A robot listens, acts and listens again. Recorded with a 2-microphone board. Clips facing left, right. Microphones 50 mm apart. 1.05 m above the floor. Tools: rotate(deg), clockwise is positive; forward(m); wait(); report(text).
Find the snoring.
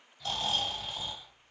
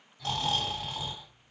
rotate(75)
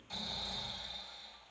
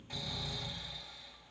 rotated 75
rotate(30)
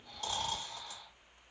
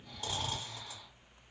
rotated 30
rotate(15)
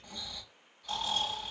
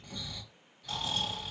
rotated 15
report("Found it: snoring, straight ahead.")